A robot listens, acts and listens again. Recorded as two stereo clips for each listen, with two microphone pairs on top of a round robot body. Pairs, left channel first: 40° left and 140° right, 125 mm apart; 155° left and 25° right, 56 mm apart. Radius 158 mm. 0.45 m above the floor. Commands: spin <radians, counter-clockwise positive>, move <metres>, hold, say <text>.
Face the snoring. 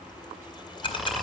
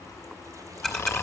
spin 2.18
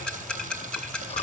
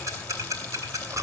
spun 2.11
say Found it: snoring, straight ahead.